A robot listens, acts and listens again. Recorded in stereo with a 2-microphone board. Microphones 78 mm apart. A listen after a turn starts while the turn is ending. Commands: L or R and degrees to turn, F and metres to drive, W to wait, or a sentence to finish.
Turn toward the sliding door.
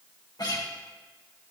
W
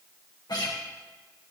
W
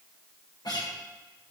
I can't make out a sliding door, only a guitar.